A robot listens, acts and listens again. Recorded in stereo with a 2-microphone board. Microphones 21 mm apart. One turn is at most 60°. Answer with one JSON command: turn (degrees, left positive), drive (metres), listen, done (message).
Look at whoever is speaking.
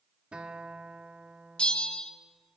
{"listen": true}
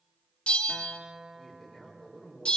{"turn": 30}
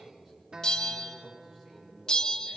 {"turn": -30}
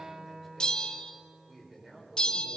{"turn": -20}
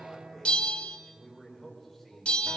{"done": "Facing the man speaking."}